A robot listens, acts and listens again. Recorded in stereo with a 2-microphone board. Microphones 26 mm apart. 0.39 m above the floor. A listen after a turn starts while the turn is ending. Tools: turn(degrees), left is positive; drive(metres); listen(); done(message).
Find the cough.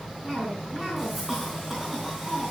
turn(degrees=-30)
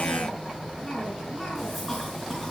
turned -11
done("Found it: a cough, straight ahead.")